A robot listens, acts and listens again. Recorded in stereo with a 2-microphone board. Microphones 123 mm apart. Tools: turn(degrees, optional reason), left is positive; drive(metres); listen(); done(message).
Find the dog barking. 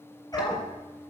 turn(degrees=30, reason="The dog barking: about 30° left or 150° left.")
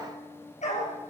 turn(degrees=110, reason="So it is at 110° left.")
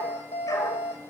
turn(degrees=25, reason="The dog barking is now 25° left.")
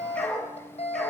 turn(degrees=10, reason="The dog barking is now 10° left.")
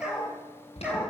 turn(degrees=-10, reason="The dog barking is now 10° right.")
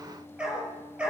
turn(degrees=-10, reason="The dog barking is now 10° right.")
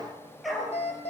done("Found it: a dog barking, straight ahead.")